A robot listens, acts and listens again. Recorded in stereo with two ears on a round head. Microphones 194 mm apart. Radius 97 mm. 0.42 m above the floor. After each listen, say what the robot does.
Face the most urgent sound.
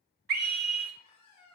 Turn 45° right.
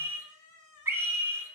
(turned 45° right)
Turn 15° right.
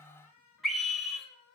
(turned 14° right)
Found it: a scream, straight ahead, 1 to 2 m away.